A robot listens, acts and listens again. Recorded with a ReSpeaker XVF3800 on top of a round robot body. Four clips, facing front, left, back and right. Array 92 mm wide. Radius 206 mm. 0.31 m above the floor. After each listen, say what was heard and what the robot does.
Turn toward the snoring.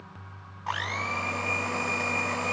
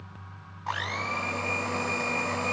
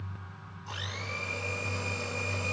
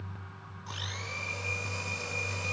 Keep listening.
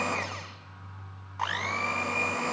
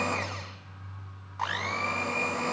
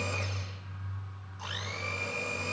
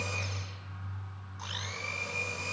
Keep listening.
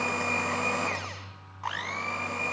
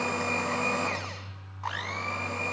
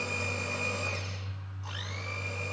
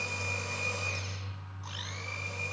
I can't make out snoring to turn to.